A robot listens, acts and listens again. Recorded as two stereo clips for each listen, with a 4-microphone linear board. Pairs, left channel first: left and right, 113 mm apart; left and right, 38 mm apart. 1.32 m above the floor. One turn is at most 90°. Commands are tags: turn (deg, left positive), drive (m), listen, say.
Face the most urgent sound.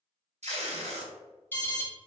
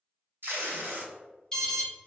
<turn deg="15"/>
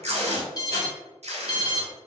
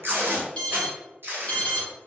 <turn deg="90"/>
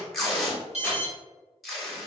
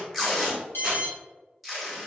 <turn deg="70"/>
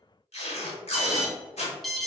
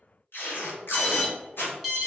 <say>Facing the alarm.</say>